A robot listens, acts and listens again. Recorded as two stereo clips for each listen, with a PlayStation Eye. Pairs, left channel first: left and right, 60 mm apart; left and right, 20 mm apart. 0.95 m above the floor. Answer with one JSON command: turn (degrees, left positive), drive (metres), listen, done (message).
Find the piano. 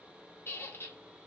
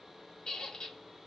{"listen": true}
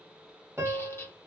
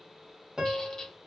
{"turn": -45}
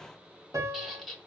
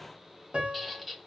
{"turn": -85}
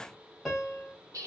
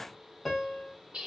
{"done": "Facing the piano."}